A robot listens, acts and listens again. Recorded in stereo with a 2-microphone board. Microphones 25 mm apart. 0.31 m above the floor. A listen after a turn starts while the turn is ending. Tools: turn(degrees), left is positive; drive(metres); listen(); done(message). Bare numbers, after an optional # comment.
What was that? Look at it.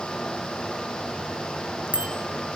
# The bicycle bell: about 60° right or 120° right.
turn(-60)
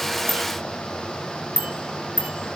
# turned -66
# So it is at 55° right.
turn(-55)
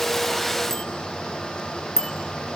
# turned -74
# The bicycle bell is now 20° left.
turn(20)
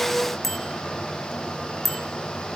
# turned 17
done("Found it: a bicycle bell, straight ahead.")